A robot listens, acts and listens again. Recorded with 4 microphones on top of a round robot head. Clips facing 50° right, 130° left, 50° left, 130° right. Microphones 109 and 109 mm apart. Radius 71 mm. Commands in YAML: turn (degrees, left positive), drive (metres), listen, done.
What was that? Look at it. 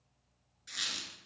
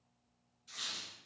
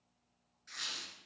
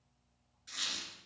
turn: -55
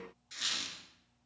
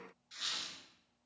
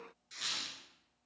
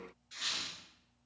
done: "Facing the squeak, 1 to 2 m away."